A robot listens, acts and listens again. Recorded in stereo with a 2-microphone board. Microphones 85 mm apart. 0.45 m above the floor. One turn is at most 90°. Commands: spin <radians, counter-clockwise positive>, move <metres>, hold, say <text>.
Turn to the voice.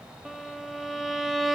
hold
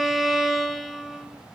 hold
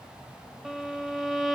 say I can't make out anyone speaking to turn to.